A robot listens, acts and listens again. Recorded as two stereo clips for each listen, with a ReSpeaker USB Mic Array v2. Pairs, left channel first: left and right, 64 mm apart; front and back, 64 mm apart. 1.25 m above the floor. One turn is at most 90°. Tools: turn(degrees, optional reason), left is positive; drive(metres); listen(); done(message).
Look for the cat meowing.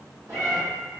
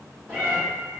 turn(degrees=-85, reason="The cat meowing: 85° right.")
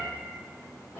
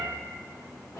turn(degrees=25, reason="The cat meowing is now 25° left.")
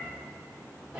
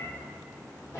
turn(degrees=-10, reason="The cat meowing is now 10° right.")
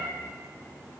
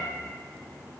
listen()
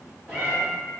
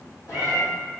done("Found it: a cat meowing, straight ahead.")